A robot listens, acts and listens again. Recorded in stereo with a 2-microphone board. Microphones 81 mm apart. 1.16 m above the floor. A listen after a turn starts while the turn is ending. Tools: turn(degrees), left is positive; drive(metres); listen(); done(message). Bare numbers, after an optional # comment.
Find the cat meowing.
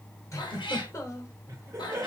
turn(90)
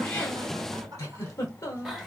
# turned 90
done("Facing the cat meowing.")